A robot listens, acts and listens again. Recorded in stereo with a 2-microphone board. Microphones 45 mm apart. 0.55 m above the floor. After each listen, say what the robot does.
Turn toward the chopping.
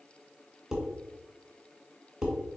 Keep listening.
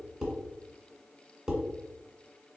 Keep listening.
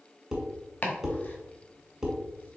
Turn 35° left.
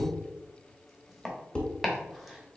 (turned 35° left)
Found it: chopping, straight ahead, 1 to 2 m away.